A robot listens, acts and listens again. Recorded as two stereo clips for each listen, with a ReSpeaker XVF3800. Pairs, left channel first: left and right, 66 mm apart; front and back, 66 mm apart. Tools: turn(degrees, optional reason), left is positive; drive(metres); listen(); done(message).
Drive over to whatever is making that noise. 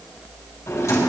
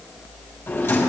turn(degrees=50, reason="The drawer: 50° left.")
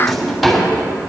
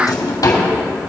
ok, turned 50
drive(metres=1.0)
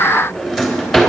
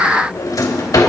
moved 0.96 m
drive(metres=1.0)
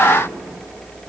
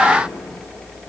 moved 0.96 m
listen()
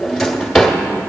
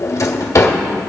drive(metres=1.0)
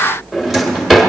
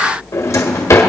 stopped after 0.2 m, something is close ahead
done("Arrived at the drawer, straight ahead.")